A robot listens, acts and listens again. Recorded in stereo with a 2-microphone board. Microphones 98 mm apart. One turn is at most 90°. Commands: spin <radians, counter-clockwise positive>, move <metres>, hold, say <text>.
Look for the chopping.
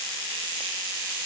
hold
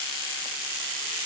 hold
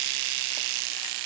say I can't make out chopping.